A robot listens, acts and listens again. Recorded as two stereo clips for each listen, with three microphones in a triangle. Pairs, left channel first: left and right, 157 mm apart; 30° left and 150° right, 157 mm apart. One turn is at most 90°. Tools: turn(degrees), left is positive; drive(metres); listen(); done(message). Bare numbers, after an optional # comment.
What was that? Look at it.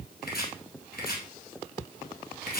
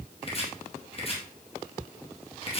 # The chopping: 80° left.
turn(80)
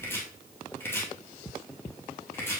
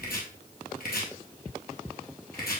# The chopping is now 15° left.
turn(15)
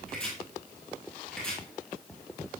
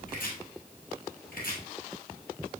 done("Facing the chopping.")